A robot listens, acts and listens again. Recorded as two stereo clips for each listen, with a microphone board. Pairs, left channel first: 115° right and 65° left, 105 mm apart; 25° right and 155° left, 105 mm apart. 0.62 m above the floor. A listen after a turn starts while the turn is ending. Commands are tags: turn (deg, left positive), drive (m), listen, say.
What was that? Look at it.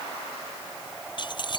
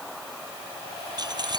<turn deg="-155"/>
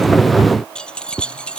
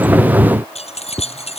<turn deg="-35"/>
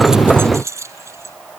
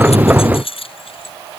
<say>Found it: keys jangling, straight ahead.</say>